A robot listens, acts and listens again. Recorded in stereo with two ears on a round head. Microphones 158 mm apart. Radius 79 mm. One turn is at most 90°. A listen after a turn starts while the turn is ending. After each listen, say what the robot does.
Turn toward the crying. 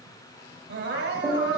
Turn 60° right.
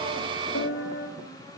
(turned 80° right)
Keep listening.
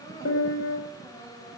Turn 20° left.
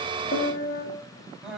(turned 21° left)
Facing the crying, 2 to 4 m away.